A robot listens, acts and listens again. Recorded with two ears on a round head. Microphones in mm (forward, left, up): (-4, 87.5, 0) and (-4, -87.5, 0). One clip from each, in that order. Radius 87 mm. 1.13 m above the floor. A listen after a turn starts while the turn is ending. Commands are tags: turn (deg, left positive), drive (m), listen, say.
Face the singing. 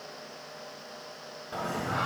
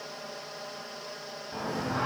<turn deg="60"/>
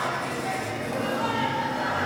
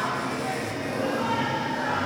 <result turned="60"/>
<turn deg="20"/>
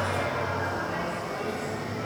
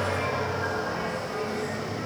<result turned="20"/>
<turn deg="10"/>
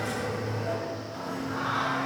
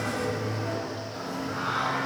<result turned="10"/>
<say>Facing the singing.</say>